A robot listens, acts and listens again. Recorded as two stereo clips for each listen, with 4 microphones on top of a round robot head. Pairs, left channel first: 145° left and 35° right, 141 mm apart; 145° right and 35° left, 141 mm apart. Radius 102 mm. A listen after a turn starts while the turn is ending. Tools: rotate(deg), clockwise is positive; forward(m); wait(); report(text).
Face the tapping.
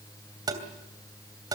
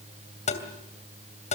rotate(100)
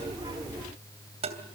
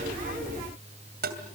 rotate(-15)
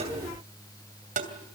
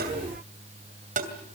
report("Facing the tapping.")